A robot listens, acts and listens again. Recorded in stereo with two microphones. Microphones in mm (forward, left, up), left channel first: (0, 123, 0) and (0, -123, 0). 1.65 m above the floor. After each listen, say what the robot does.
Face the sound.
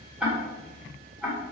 Turn 30° right.
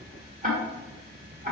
Turn 145° right.
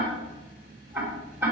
Turn 10° right.
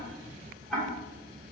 Facing the ticking, 2 to 4 m away.